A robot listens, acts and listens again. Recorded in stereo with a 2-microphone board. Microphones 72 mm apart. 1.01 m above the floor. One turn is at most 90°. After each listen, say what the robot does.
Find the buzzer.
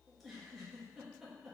Keep listening.
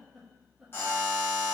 Turn 35° left.
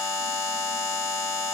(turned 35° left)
Facing the buzzer, 1 to 2 m away.